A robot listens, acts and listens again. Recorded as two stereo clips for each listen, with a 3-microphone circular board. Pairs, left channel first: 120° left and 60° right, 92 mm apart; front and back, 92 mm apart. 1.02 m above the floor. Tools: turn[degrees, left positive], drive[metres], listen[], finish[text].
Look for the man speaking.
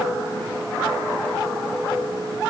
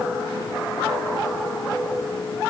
Action: listen[]
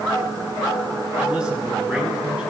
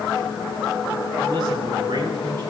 Thought: The man speaking: 140° right.
Action: turn[-140]
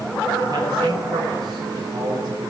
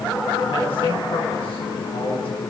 Thought: The man speaking is now 20° right.
Action: turn[-20]
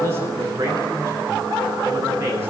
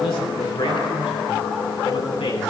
Action: finish[Found it: a man speaking, straight ahead.]